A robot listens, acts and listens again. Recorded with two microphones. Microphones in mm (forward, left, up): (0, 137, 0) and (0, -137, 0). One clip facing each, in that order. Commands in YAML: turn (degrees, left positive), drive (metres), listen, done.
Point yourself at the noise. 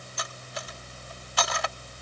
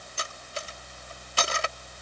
turn: -30
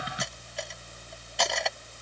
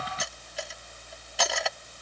done: "Found it: cutlery clinking, straight ahead."